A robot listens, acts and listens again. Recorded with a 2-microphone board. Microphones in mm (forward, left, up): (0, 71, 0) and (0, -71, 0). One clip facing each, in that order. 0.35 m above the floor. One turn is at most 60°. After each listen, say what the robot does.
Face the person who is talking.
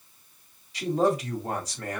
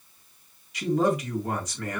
Turn 35° left.
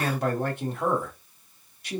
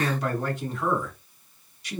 Turn 60° left.
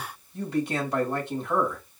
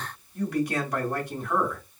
Turn 30° left.
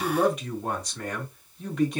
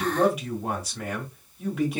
Found it: a man speaking, straight ahead, 2 to 4 m away.